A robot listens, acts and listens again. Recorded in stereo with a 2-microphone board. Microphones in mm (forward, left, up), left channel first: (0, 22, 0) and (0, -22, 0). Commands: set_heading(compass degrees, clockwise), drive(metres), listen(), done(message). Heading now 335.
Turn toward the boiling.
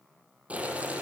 set_heading(5)
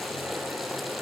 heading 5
done("Facing the boiling.")